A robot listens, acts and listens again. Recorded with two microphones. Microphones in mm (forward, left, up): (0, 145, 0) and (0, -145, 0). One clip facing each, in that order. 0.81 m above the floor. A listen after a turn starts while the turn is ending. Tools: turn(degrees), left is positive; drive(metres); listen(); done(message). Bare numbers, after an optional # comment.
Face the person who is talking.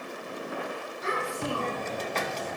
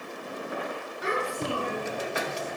turn(-90)
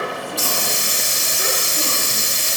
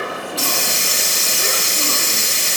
listen()
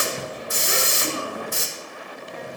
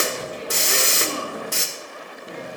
listen()
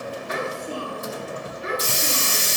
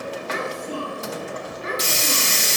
# The child speaking is now 10° left.
turn(10)
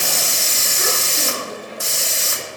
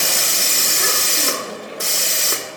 listen()
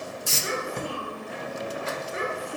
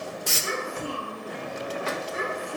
done("Found it: a child speaking, straight ahead, over 4 m away.")